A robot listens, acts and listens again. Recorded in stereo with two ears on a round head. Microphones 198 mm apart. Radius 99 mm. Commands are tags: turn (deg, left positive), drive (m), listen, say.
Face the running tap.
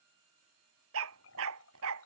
<turn deg="65"/>
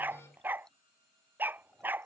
<listen/>
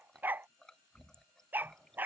<say>Facing the running tap.</say>